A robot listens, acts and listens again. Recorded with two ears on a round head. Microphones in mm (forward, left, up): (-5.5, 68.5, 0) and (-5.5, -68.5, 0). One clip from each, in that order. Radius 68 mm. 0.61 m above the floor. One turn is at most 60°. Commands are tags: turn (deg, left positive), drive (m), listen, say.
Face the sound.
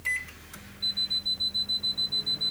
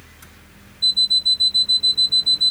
<turn deg="-60"/>
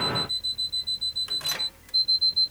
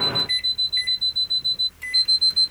<turn deg="-10"/>
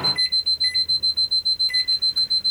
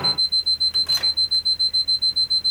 <say>Facing the alarm clock.</say>